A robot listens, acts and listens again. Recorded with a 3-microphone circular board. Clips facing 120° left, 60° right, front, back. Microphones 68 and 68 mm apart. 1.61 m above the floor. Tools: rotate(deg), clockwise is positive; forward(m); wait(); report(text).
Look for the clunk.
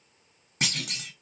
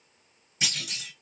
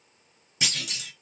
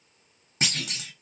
rotate(-140)
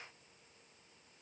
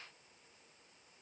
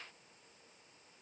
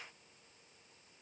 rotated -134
report("I heard a clunk from this way, but can't make it out now.")